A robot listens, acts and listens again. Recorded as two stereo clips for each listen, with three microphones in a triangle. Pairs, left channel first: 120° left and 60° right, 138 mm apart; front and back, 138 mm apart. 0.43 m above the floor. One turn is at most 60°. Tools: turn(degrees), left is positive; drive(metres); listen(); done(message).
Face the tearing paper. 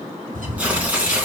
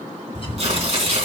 turn(degrees=-60)
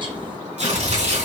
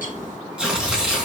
turn(degrees=-60)
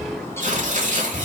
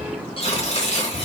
turn(degrees=-40)
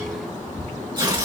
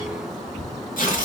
done("Found it: tearing paper, straight ahead, 2 to 4 m away.")